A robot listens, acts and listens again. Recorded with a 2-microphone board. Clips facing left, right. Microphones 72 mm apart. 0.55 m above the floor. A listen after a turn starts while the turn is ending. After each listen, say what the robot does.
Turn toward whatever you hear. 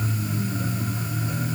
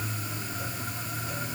Keep listening.
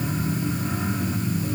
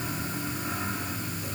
Keep listening.
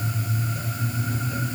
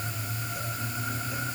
I can't make out anything to turn to.